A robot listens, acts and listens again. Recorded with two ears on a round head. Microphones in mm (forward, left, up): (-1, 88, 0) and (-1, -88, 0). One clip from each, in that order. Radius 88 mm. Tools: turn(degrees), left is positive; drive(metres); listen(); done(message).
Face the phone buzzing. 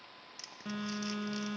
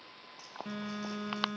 turn(degrees=30)
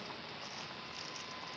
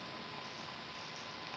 listen()
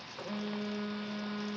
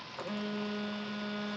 turn(degrees=-20)
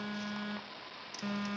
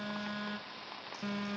done("Facing the phone buzzing.")